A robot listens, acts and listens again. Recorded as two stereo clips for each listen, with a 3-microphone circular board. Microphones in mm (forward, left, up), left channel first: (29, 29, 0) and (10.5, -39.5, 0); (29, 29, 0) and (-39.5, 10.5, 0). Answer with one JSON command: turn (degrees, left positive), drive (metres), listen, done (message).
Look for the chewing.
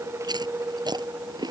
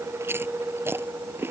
{"turn": -110}
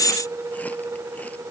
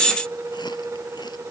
{"listen": true}
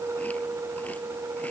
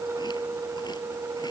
{"listen": true}
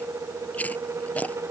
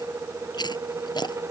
{"done": "Facing the chewing."}